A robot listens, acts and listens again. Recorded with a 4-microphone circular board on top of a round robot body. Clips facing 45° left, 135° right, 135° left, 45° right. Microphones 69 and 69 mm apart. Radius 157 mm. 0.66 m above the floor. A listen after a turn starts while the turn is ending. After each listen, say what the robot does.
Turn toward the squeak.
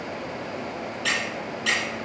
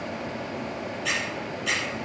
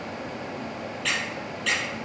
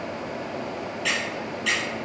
Turn 40° left.
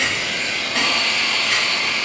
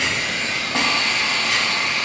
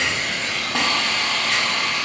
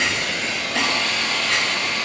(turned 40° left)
Keep listening.
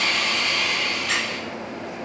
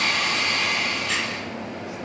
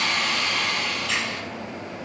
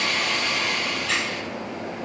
Keep listening.
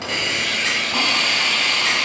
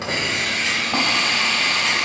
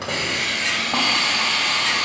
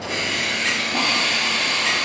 Facing where the squeak came from. I can't hear it now.